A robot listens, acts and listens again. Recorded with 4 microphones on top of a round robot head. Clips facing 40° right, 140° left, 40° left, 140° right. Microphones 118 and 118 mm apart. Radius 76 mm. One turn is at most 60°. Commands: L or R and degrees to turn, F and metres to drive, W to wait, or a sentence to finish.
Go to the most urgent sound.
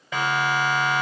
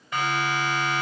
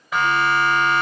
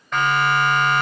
R45
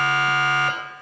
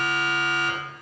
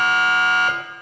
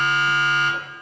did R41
F1.0
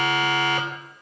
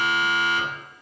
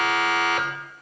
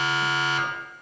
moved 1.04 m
F1.0
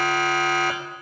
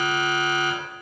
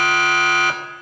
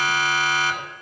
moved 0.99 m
F1.0
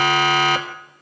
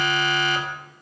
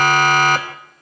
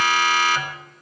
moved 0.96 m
F1.0
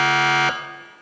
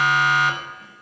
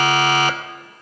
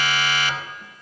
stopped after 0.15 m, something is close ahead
R10
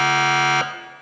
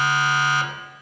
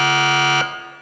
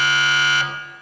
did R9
Arrived at the siren, straight ahead.